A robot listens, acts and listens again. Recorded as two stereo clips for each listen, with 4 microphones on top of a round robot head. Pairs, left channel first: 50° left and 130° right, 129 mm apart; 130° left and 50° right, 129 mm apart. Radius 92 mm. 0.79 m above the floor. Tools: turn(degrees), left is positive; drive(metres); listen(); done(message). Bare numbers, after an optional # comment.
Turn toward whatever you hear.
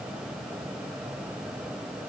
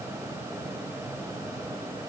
listen()
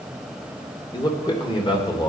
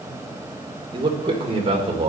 done("Found it: a man speaking, straight ahead, 2 to 4 m away.")